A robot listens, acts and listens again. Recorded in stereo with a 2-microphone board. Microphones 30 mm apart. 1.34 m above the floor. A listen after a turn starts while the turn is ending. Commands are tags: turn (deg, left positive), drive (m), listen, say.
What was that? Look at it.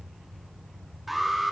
<turn deg="30"/>
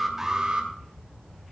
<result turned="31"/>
<turn deg="-35"/>
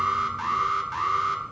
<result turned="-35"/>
<say>Facing the alarm, 2 to 4 m away.</say>